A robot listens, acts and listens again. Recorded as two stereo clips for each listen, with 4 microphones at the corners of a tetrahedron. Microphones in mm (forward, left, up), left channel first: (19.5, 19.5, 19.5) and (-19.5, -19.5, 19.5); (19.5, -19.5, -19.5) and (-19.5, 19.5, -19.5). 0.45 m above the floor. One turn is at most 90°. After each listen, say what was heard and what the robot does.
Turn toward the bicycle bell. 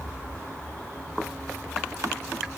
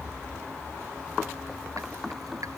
Keep listening.
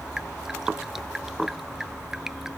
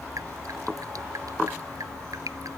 Keep listening.
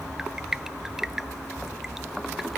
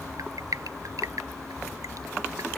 I can't make out a bicycle bell, only dripping.